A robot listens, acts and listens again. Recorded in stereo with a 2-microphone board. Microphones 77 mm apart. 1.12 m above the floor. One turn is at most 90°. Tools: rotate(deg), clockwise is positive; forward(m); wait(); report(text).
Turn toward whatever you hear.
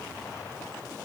wait()
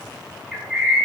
rotate(-30)
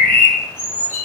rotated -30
rotate(-90)
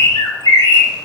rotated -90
rotate(-80)
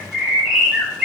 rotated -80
rotate(10)
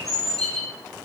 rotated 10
report("Facing the bird.")